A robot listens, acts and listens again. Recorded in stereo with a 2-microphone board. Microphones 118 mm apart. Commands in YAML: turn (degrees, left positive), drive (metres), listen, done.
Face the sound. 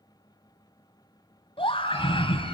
turn: 45
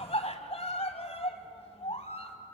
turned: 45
turn: 80
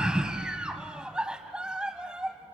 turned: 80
turn: -10
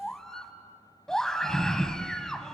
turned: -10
done: "Found it: a scream, straight ahead."